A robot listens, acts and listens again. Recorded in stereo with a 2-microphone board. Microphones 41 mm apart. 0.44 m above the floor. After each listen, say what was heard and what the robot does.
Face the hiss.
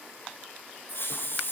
The hiss: about 60° left or 120° left. Turn 60° left.
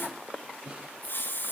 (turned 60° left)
So it is at 55° left. Turn 55° left.
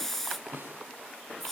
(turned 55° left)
The hiss is now 10° left. Turn 10° left.
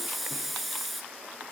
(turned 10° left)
Found it: a hiss, straight ahead, 2 to 4 m away.